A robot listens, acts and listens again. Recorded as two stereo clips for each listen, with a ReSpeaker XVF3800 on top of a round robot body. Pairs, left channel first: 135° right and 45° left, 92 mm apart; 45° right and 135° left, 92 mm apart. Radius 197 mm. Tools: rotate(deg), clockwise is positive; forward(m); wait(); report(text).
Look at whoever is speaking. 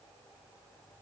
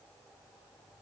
wait()
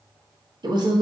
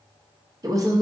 rotate(-85)
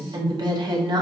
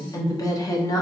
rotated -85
report("Found it: a woman speaking, straight ahead, 1 to 2 m away.")